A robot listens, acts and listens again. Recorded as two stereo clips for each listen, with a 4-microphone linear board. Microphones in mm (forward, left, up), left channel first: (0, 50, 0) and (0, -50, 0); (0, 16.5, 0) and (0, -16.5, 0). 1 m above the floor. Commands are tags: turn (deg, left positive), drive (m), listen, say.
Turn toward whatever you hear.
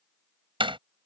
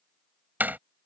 <turn deg="-60"/>
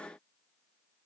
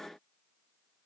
<listen/>
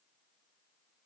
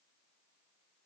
<say>I heard a door slam, but can't make it out now. It was about straight ahead or 60° right.</say>